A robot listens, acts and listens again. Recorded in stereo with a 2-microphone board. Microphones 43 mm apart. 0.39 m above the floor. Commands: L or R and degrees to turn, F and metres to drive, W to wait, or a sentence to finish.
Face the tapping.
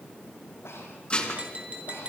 R30
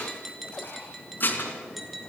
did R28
Found it: tapping, straight ahead, over 4 m away.